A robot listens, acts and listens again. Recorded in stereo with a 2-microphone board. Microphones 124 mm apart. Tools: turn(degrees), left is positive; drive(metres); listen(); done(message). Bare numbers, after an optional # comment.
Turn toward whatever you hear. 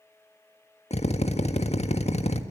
# The drill: about 60° left or 120° left.
turn(60)
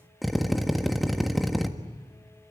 done("Found it: a drill, straight ahead.")